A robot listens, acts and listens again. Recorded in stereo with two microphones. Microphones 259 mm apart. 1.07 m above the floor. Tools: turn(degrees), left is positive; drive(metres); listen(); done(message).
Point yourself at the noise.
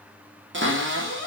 turn(degrees=-45)
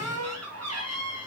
turn(degrees=-85)
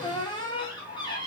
turn(degrees=15)
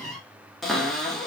done("Facing the cupboard door.")